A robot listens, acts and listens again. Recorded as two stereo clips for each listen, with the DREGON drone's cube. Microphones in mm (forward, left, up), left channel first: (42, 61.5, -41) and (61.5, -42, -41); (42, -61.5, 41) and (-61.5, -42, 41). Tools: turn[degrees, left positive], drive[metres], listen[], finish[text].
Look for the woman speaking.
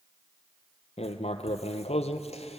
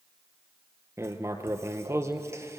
Action: listen[]
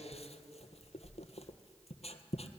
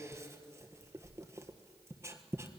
Action: listen[]
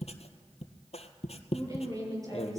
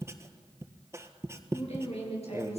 Thought: The woman speaking: 20° right.
Action: turn[-20]
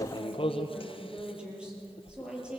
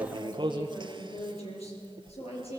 Action: finish[Facing the woman speaking.]